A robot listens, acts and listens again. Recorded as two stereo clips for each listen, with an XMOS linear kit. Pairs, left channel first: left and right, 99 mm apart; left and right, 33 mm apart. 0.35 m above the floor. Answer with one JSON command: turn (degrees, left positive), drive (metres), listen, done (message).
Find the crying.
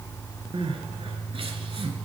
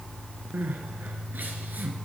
{"turn": -70}
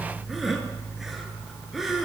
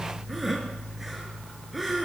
{"done": "Found it: crying, straight ahead, under 1 m away."}